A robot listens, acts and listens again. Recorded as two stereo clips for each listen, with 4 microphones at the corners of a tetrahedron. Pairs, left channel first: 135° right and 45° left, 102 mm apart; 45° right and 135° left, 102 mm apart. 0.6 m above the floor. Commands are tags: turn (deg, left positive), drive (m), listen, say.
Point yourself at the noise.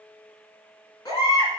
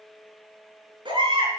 <turn deg="175"/>
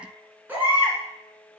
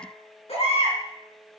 <turn deg="-25"/>
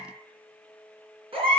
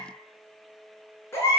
<turn deg="20"/>
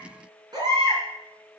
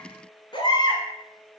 <say>Facing the baby crying.</say>